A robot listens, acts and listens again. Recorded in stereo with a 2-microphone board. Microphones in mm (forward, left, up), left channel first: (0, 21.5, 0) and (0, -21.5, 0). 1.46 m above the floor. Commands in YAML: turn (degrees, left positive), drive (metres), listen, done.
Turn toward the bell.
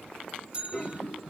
turn: -25
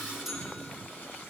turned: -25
listen: true
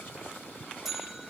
done: "Found it: a bell, straight ahead, 1 to 2 m away."